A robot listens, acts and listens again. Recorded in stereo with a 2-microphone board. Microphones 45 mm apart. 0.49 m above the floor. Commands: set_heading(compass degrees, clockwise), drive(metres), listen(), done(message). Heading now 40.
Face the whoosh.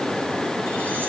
listen()
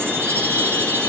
listen()
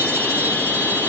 done("I can't make out a whoosh, only a chime.")